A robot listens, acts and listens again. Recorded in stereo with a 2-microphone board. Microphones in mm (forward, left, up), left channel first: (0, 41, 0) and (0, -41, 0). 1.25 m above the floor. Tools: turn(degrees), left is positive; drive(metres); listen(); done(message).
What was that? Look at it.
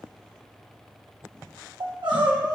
turn(degrees=-65)
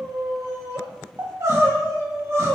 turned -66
turn(degrees=-40)
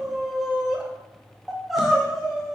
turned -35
done("Found it: crying, straight ahead, 1 to 2 m away.")